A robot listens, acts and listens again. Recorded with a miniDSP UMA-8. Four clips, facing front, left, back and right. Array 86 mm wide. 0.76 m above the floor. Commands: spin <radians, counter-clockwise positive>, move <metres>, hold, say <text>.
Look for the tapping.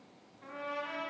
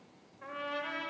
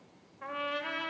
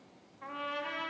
hold
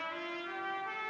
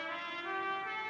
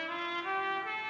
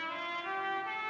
hold
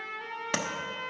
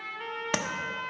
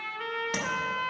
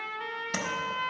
spin 1.05
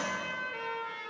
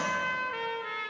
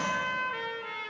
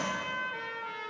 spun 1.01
hold
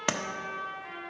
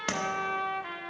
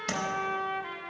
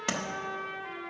say Facing the tapping.